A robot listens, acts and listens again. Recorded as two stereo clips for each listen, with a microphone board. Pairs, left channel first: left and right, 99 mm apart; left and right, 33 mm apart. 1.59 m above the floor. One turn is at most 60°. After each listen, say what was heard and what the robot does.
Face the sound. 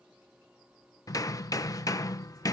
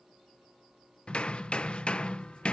The hammering: about 40° left or 140° left. Turn 40° left.
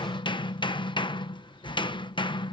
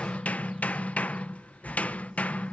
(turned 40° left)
So it is at 90° left. Turn 60° left.
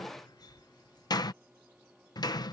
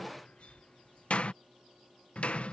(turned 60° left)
The hammering is now 55° left. Turn 55° left.
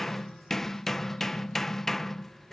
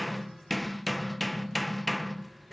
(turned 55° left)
Facing the hammering.